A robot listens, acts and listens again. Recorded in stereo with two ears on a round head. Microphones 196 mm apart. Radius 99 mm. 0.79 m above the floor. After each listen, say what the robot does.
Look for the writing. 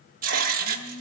Turn 40° right.
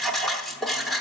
Found it: writing, straight ahead, under 1 m away.